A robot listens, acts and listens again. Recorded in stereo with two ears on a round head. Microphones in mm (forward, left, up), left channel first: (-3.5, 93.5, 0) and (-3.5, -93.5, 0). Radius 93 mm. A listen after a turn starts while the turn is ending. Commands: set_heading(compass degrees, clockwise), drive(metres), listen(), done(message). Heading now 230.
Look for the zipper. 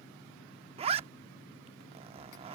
set_heading(260)
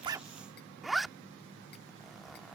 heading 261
done("Found it: a zipper, straight ahead.")